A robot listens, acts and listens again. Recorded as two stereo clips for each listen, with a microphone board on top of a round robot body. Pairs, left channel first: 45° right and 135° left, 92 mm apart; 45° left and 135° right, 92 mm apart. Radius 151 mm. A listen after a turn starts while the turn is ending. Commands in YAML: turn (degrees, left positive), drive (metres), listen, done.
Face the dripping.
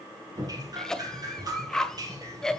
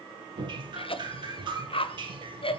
turn: -175
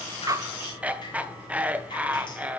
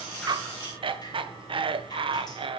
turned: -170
done: "Found it: dripping, straight ahead, 2 to 4 m away."